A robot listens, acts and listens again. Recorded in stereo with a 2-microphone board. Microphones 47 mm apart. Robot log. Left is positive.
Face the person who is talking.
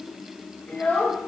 note: The child speaking: about 35° left or 145° left.
cmd yaw +35
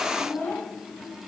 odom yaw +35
note: So it is at 115° left.
cmd yaw +115
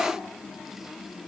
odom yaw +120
cmd idle
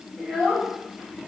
end: Facing the child speaking, over 4 m away.